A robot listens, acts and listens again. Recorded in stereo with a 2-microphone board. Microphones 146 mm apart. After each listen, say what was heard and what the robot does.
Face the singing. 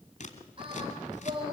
The singing: about 35° right or 145° right. Turn 35° right.
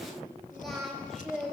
Found it: singing, straight ahead.